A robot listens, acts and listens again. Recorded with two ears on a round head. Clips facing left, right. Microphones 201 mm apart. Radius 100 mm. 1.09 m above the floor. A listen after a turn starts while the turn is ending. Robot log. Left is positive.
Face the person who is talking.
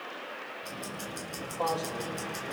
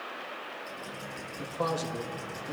note: The man speaking: about 35° right or 145° right.
cmd yaw -35
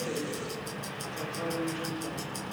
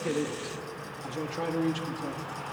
note: So it is at 105° right.
cmd yaw -105
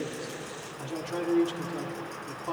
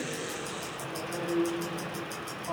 note: The man speaking is now 60° left.
cmd yaw +60
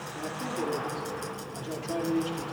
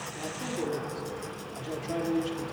end: Found it: a man speaking, straight ahead.